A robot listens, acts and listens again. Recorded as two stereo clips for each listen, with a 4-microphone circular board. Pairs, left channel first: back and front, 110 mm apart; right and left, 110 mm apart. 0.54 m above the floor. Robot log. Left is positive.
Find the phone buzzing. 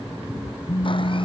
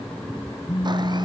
note: The phone buzzing: 130° right.
cmd yaw -130
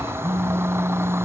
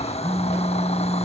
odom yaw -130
note: The phone buzzing is now 25° left.
cmd yaw +25
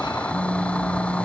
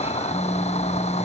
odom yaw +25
note: The phone buzzing is now 10° right.
cmd yaw -10
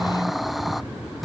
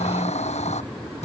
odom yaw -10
cmd idle
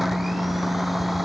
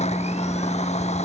end: Facing the phone buzzing.